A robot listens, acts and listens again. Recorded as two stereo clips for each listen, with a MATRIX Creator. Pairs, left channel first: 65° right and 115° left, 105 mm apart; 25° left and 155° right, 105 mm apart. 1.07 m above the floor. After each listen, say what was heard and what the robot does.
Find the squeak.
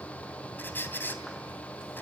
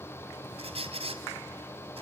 The squeak: 140° right. Turn 140° right.
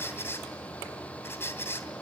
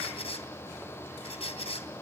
Facing the squeak, 2 to 4 m away.